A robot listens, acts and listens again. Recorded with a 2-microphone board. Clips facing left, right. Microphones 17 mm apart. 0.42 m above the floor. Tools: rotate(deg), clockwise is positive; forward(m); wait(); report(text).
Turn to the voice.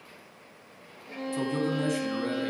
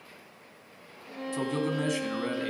rotate(30)
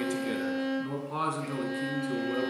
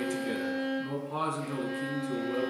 rotate(-20)
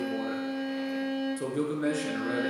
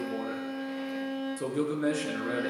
report("Found it: a man speaking, straight ahead.")